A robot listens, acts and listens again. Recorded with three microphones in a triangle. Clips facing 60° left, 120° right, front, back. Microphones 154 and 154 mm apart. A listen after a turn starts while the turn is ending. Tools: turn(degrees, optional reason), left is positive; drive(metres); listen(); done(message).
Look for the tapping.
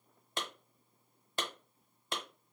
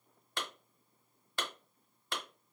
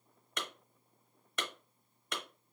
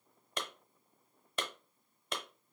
listen()
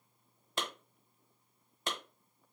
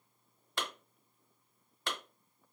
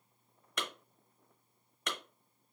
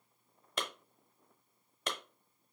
listen()
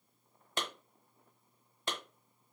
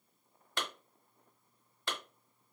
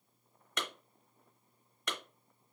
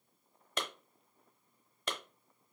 done("I can't make out tapping to turn to.")